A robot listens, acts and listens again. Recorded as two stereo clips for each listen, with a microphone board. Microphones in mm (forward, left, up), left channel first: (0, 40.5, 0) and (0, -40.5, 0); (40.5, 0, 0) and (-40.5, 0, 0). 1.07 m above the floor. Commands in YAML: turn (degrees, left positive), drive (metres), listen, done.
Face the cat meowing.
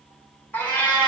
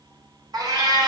turn: 165
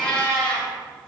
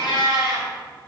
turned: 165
turn: 15
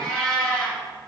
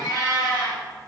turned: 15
turn: 10
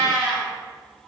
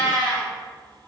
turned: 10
done: "Facing the cat meowing, 2 to 4 m away."